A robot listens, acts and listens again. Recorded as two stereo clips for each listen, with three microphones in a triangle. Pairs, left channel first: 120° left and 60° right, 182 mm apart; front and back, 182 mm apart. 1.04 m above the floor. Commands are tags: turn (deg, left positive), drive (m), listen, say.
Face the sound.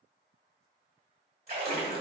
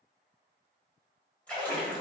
<turn deg="-80"/>
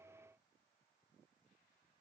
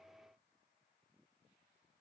<say>I heard a splash from this way, but can't make it out now.</say>